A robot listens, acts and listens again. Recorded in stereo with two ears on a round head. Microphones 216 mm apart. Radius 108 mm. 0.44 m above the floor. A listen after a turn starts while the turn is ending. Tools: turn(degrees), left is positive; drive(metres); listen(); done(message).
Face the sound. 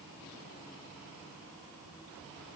listen()
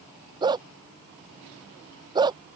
turn(degrees=-20)
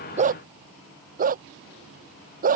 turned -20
turn(degrees=-145)
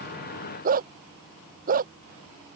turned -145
turn(degrees=-35)
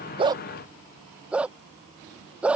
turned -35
done("Facing the dog barking.")